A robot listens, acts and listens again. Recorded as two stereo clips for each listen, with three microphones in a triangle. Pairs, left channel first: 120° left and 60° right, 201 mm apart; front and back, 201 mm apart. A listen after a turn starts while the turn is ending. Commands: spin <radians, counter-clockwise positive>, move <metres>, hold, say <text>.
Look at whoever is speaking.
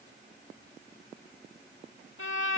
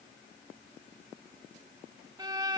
hold
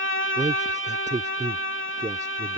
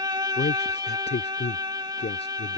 spin -0.17
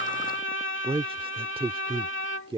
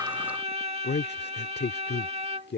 say Facing the man speaking.